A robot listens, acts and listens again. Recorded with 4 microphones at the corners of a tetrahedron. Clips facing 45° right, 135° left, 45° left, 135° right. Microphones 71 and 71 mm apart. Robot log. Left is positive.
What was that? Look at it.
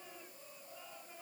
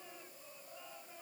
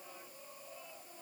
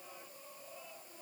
cmd idle
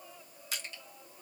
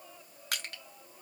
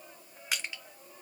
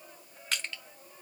note: The crushing: 125° left.
cmd yaw +125
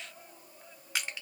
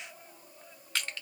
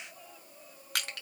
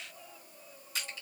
note: The crushing is now 30° left.
cmd yaw +30
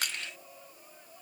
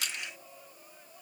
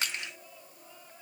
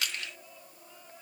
note: The crushing is now 15° right.
cmd yaw -15
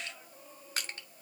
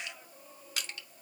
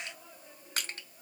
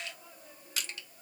end: Facing the crushing, under 1 m away.